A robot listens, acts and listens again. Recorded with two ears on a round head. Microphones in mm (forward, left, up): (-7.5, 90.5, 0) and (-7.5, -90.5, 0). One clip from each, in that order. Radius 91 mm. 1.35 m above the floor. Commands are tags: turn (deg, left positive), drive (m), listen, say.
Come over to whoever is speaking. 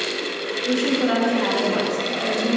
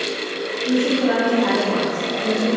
<turn deg="90"/>
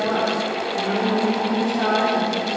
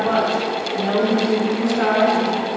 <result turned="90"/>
<drive m="1.0"/>
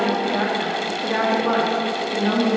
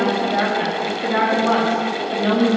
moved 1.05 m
<drive m="1.0"/>
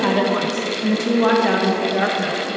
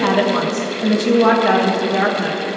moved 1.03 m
<drive m="1.0"/>
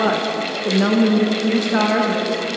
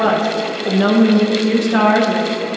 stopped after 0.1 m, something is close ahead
<say>Arrived at the woman speaking, straight ahead.</say>